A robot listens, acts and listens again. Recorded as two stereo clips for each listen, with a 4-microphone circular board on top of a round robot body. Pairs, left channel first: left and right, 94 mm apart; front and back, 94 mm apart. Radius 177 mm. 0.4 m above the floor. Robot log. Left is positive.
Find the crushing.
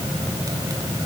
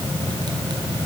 cmd idle
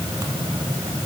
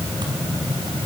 cmd idle
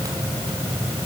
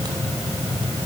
end: I can't make out crushing to turn to.